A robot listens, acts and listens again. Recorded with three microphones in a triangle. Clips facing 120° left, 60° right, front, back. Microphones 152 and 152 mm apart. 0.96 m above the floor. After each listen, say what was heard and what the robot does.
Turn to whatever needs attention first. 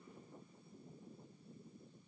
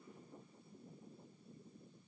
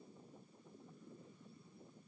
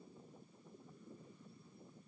Keep listening.
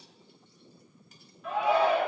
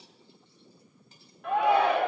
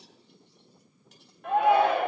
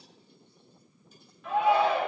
The shout: 30° right. Turn 30° right.
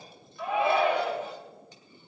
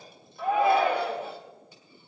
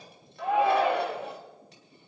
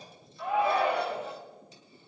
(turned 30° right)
The shout is now 10° right. Turn 10° right.
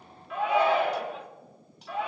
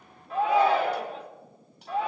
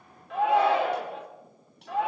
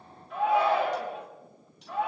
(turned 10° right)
The shout is now 10° right. Turn 10° right.
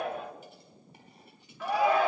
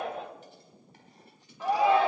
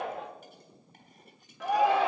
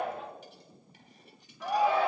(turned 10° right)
Found it: a shout, straight ahead.